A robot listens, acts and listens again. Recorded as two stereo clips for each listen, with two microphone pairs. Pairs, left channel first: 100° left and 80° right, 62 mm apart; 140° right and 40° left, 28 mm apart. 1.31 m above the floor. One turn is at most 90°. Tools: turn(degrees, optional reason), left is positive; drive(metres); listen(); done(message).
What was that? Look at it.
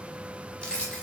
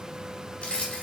turn(degrees=90, reason="The keys jangling: 170° left.")
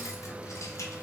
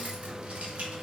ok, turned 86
turn(degrees=85, reason="Nothing new. It was at 85° left.")
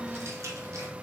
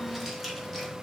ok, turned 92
turn(degrees=-10, reason="Nothing new. It was at 10° right.")
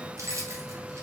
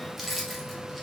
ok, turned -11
turn(degrees=-50, reason="The keys jangling is now 50° right.")
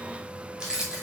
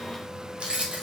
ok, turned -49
done("Found it: keys jangling, straight ahead.")